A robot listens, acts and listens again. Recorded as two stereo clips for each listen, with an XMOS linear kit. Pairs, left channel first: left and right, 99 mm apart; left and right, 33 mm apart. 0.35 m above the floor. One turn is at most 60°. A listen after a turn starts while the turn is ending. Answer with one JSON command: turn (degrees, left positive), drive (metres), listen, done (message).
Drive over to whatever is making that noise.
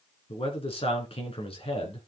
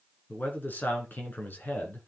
{"turn": 60}
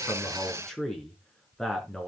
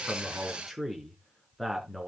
{"drive": 1.0}
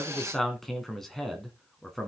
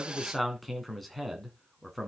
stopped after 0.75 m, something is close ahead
{"done": "Blocked. The man speaking is further on, straight ahead."}